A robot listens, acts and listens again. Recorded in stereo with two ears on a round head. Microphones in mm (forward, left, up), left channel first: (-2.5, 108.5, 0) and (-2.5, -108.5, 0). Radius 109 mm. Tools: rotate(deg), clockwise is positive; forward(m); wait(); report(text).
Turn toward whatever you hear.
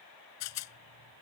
rotate(-75)
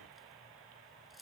wait()
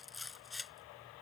report("Found it: a rattle, straight ahead.")